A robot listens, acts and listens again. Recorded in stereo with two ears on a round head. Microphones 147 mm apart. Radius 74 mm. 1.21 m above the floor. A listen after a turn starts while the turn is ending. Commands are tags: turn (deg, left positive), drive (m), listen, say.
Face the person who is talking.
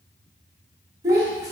<turn deg="-20"/>
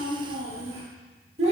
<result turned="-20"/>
<turn deg="-140"/>
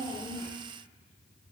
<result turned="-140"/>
<listen/>
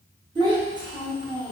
<turn deg="-30"/>
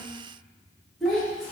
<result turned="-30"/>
<say>Found it: a child speaking, straight ahead, 1 to 2 m away.</say>